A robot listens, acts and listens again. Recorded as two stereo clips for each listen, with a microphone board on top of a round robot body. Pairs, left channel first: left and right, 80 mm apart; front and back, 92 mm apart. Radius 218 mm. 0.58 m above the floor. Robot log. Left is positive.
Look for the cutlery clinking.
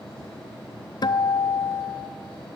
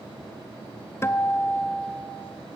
cmd idle
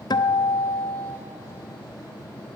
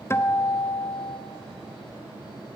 cmd idle
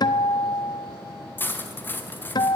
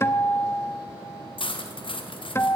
note: The cutlery clinking: 25° left.
cmd yaw +25
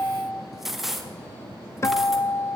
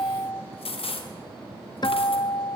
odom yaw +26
end: Found it: cutlery clinking, straight ahead, 1 to 2 m away.